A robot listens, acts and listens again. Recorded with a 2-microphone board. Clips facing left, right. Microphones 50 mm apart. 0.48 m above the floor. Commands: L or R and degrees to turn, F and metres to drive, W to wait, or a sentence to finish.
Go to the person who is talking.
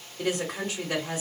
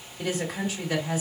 L55
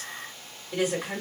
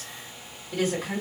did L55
L15
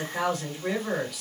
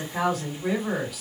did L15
F1.0
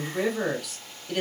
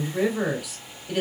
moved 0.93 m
R10
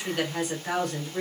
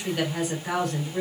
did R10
F1.0
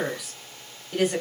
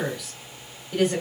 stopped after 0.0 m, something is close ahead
I am next to the woman speaking.